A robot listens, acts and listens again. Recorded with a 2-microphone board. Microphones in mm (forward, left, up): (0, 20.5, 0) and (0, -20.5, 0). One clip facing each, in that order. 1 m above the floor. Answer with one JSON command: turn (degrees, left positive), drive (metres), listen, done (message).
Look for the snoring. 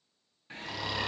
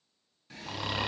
{"turn": -25}
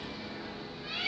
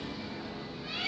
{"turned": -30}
{"listen": true}
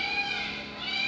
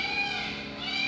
{"listen": true}
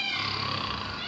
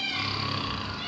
{"done": "Found it: snoring, straight ahead."}